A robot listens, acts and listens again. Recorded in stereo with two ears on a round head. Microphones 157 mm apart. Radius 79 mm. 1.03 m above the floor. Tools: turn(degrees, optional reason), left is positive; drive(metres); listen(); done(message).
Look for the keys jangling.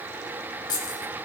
turn(degrees=25, reason="The keys jangling: about 25° left or 155° left.")
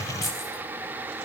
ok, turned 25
listen()
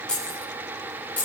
turn(degrees=30)
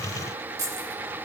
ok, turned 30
turn(degrees=-20, reason="So it is at 20° right.")
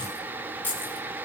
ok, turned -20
turn(degrees=10, reason="The keys jangling is now 10° left.")
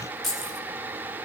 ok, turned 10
done("Facing the keys jangling, over 4 m away.")